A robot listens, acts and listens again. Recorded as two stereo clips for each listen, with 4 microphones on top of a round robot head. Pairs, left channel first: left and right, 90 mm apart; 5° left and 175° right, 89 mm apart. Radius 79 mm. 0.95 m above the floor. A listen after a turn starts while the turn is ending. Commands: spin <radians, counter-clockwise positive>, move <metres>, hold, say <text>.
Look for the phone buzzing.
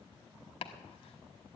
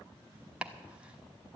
hold
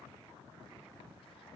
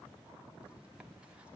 hold
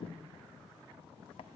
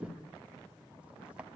say I can't make out a phone buzzing to turn to.